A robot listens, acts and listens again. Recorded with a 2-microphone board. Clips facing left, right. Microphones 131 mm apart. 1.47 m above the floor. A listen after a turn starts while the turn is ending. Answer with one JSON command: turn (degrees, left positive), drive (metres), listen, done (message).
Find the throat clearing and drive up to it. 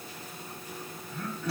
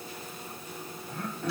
{"turn": -60}
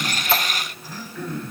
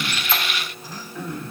{"turn": -20}
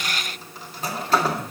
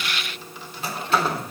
{"drive": 1.0}
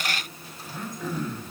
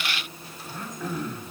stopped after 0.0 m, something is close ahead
{"done": "Blocked. The throat clearing is further on, straight ahead."}